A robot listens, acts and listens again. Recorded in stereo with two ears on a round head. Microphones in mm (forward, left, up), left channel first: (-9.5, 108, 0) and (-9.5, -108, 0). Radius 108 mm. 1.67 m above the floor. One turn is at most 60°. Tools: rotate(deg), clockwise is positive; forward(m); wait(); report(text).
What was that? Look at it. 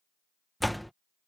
rotate(-30)
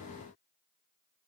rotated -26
wait()
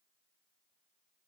report("I heard a door slam, but can't make it out now. It was about 25° right or 155° left.")